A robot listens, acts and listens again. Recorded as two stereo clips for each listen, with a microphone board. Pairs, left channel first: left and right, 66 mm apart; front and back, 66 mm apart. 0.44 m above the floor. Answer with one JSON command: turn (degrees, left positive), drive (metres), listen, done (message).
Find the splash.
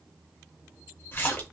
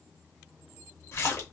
{"turn": 35}
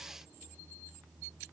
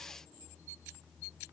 {"done": "I heard a splash from this way, but can't make it out now."}